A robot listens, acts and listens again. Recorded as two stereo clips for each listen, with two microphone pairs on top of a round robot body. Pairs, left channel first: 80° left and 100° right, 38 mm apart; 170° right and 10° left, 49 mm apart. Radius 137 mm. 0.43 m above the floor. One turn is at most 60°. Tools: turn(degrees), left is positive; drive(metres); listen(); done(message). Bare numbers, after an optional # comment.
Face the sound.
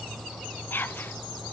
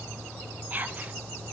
# The whispering: 70° left.
turn(60)
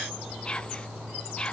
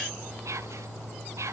# The whispering is now 15° left.
turn(15)
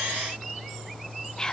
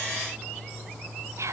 done("Facing the whispering, 2 to 4 m away.")